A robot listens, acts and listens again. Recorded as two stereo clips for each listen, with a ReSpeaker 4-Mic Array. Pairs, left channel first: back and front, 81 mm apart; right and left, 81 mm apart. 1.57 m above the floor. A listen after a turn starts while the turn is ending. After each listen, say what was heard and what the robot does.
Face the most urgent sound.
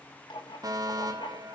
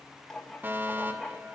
The fire alarm: 25° left. Turn 25° left.
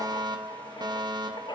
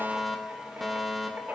Facing the fire alarm, 2 to 4 m away.